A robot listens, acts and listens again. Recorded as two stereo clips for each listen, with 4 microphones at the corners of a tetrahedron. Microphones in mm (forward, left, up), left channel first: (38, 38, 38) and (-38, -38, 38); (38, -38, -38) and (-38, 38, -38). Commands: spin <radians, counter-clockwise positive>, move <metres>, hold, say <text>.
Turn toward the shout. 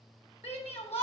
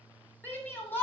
spin 0.44
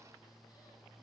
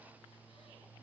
hold
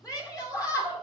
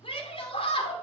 spin -0.17
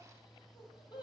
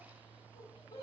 say Found it: a shout, straight ahead.